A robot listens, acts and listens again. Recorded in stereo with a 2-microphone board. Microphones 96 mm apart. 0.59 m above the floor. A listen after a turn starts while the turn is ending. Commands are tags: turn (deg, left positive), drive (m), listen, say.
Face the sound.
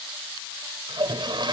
<turn deg="-50"/>
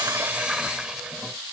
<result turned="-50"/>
<turn deg="-10"/>
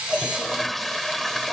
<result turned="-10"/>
<say>Found it: a toilet flushing, straight ahead.</say>